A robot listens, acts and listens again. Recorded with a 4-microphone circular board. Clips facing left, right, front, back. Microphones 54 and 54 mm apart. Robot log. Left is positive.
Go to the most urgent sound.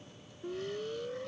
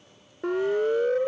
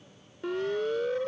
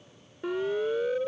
note: The siren: 95° right.
cmd yaw -95
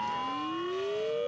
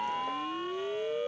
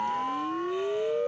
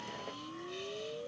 cmd fwd 1.0
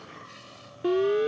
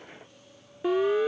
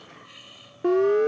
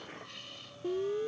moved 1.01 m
note: The siren is now 10° right.
cmd yaw -10
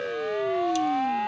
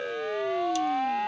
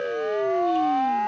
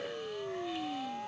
cmd fwd 1.0
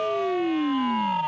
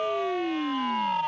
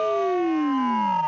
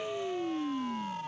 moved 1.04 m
cmd fwd 1.0
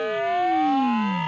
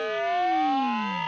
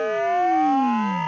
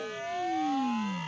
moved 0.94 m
cmd fwd 1.0
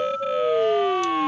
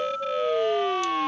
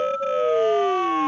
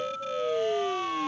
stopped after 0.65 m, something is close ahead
note: The siren is now 15° left.
cmd yaw +15
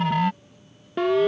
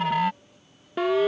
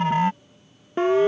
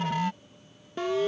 end: Arrived at the siren, straight ahead.